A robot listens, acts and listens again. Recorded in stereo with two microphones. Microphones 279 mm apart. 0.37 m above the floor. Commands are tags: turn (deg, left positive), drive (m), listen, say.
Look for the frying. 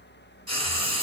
<turn deg="90"/>
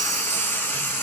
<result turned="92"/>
<turn deg="10"/>
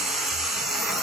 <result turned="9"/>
<say>Facing the frying, under 1 m away.</say>